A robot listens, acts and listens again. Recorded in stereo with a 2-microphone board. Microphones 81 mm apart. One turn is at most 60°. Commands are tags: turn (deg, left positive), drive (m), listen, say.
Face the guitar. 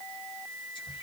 <listen/>
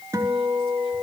<turn deg="-35"/>
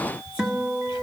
<say>Found it: a guitar, straight ahead.</say>